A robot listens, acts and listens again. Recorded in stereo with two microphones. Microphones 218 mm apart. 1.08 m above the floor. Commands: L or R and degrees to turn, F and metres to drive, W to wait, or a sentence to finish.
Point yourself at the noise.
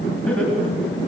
L30
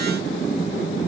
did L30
W
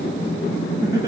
R15
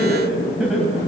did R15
Facing the laughter, over 4 m away.